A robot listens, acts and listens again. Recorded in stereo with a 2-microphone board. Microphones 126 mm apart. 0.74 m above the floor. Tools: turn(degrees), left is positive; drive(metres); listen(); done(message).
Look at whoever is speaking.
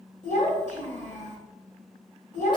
turn(degrees=90)
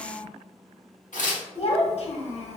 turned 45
turn(degrees=55)
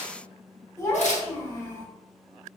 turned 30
turn(degrees=25)
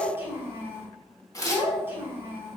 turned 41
turn(degrees=-15)
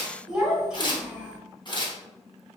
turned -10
done("Found it: a child speaking, straight ahead, 1 to 2 m away.")